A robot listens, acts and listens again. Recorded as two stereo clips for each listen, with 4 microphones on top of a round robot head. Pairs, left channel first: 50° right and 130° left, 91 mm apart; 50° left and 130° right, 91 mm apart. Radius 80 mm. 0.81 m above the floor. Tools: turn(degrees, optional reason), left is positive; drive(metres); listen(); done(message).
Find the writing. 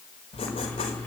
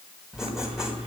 turn(degrees=-45, reason="The writing: 45° right.")
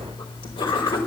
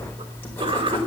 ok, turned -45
turn(degrees=-20, reason="The writing is now 20° right.")
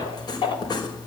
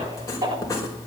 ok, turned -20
done("Facing the writing.")